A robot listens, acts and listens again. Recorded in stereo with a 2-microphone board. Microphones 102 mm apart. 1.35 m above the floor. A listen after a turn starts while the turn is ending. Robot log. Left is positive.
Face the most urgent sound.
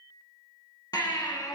note: The baby crying: about 40° left or 140° left.
cmd yaw +40
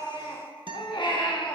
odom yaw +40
note: So it is at 90° left.
cmd yaw +90
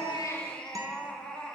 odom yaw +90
note: The baby crying is now 10° left.
cmd yaw +10
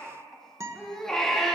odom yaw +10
end: Facing the baby crying, 1 to 2 m away.